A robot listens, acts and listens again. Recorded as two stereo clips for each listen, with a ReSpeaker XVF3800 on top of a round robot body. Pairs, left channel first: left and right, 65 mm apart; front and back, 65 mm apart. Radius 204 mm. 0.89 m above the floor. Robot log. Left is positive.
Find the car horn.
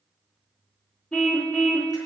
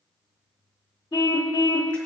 note: The car horn: 20° left.
cmd yaw +20
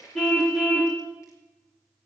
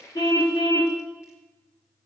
end: Facing the car horn, 2 to 4 m away.